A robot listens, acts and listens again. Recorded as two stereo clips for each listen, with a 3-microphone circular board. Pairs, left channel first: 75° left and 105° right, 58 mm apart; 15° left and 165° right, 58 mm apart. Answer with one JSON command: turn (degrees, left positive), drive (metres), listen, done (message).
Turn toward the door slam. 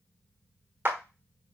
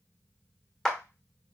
{"listen": true}
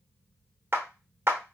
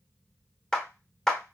{"listen": true}
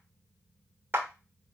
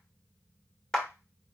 {"done": "I can't make out a door slam to turn to."}